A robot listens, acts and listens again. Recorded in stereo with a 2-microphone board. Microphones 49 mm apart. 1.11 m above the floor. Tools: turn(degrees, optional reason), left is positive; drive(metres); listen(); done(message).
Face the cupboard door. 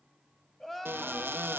turn(degrees=-50, reason="The cupboard door: about 50° right or 130° right.")
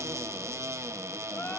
turn(degrees=-85, reason="So it is at 85° right.")
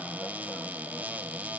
turn(degrees=-35, reason="The cupboard door is now 35° right.")
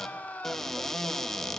done("Found it: a cupboard door, straight ahead.")